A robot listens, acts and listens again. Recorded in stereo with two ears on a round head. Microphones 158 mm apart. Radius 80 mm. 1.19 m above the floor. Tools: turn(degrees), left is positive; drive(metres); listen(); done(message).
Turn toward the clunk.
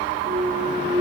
turn(degrees=-30)
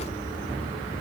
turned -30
listen()
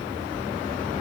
done("I heard a clunk, but can't make it out now. It was about straight ahead or 120° right.")